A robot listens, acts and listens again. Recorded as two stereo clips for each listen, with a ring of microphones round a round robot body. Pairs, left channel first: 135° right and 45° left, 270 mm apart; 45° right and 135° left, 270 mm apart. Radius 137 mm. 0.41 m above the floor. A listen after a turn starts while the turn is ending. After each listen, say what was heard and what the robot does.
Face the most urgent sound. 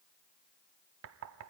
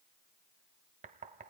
Keep listening.
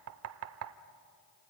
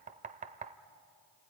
Keep listening.
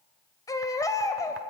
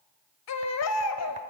The baby crying: 60° right. Turn 60° right.
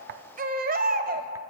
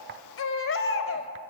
The baby crying is now 10° right. Turn 10° right.
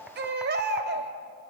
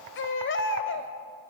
Facing the baby crying, 1 to 2 m away.